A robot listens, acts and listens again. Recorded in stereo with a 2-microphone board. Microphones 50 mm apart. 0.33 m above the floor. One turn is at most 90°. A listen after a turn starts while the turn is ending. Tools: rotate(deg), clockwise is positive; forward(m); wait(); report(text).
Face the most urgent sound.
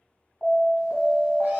rotate(-20)
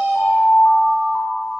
rotate(-90)
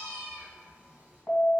rotate(-50)
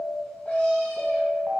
rotate(15)
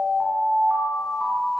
report("Facing the alarm.")